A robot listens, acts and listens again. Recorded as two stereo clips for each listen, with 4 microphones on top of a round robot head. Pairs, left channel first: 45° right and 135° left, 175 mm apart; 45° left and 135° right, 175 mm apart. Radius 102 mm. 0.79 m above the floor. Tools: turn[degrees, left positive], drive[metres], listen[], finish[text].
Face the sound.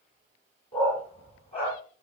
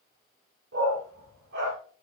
Thought: The dog barking: 100° right.
Action: turn[-100]
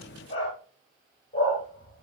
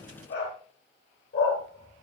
Thought: The dog barking is now 20° left.
Action: turn[20]
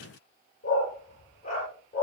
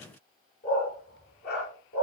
Thought: The dog barking is now 10° left.
Action: turn[10]
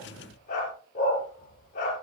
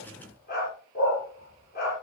Action: finish[Facing the dog barking.]